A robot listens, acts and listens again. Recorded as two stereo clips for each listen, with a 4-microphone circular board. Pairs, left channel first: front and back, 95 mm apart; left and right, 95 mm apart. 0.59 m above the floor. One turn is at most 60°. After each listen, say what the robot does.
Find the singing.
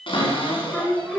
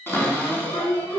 Turn 60° left.
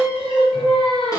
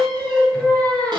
Turn 10° left.
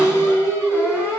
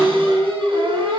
Facing the singing, 2 to 4 m away.